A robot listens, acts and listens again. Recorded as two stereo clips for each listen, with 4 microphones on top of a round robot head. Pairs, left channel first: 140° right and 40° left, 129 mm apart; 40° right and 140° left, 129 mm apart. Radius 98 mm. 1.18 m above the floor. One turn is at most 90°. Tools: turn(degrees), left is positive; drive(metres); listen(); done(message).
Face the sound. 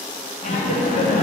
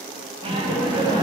turn(degrees=-90)
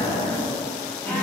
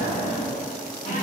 turn(degrees=-60)
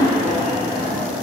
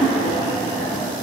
turn(degrees=20)
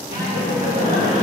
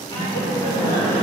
turn(degrees=10)
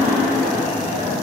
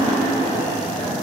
done("Facing the laughter.")